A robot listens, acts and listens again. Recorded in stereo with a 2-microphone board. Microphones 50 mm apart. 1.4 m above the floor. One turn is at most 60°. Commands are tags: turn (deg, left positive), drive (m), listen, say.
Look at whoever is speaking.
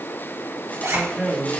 <turn deg="-30"/>
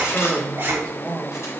<turn deg="15"/>
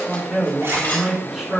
<say>Found it: a man speaking, straight ahead, over 4 m away.</say>